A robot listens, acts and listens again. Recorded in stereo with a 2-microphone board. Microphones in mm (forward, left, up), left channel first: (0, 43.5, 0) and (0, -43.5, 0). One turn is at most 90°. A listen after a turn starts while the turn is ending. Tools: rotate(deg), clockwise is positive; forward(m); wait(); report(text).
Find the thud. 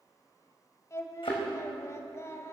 rotate(-70)
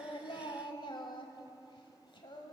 wait()
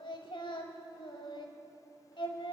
report("I heard a thud, but can't make it out now. It was about straight ahead or 40° left.")